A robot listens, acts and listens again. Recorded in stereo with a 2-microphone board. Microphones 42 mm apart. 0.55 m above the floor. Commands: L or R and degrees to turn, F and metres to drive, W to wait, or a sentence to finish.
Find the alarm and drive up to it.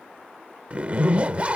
W
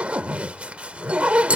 W
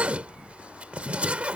I can't make out an alarm to turn to.